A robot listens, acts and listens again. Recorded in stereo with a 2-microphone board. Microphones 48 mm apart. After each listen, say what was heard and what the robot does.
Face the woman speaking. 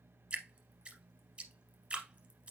Keep listening.
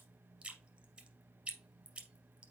Keep listening.
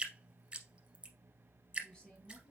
Turn 30° left.
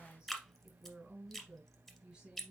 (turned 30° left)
So it is at 20° right. Turn 20° right.
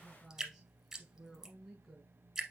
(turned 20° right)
Facing the woman speaking, 2 to 4 m away.